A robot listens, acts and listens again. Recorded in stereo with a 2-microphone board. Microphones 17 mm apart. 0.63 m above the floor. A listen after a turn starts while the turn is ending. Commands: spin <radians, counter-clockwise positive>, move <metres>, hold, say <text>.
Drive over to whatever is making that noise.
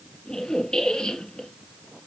spin 0.87
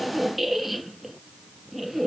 move 1.0
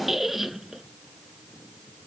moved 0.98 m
spin -0.26
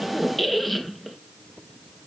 move 1.0
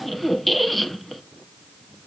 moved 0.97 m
move 1.0
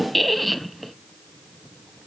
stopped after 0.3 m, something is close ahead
say I am next to the squeak.